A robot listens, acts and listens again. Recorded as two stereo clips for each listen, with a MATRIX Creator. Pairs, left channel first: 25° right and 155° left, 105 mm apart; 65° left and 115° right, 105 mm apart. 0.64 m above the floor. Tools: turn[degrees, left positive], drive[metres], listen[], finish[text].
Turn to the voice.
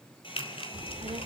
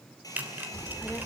Thought: The child speaking: 135° left.
Action: turn[135]
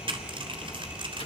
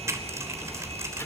Action: finish[Found it: a child speaking, straight ahead, 1 to 2 m away.]